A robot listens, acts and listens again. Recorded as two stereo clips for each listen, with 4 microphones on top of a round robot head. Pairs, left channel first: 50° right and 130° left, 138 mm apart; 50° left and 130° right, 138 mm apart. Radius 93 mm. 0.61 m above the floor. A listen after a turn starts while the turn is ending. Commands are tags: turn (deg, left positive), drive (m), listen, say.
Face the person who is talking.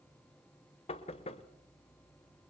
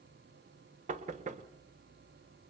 <listen/>
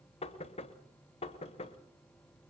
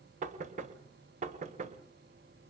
<listen/>
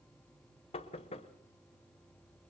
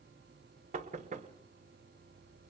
<say>I can't make out anyone speaking, only knocking.</say>